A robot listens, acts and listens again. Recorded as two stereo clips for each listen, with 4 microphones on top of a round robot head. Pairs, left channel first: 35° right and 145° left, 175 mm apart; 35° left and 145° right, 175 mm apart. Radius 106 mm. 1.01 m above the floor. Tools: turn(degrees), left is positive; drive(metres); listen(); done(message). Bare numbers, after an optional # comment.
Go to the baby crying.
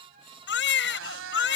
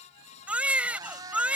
# The baby crying: 60° right.
turn(-60)
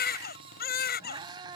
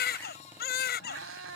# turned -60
drive(1.0)
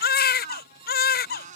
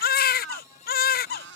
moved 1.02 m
drive(1.0)
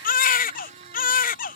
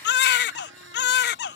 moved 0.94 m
drive(1.0)
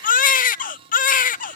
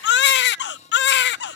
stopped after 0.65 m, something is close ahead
# The baby crying is now 10° left.
turn(10)
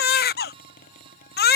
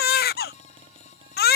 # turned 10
done("I am next to the baby crying.")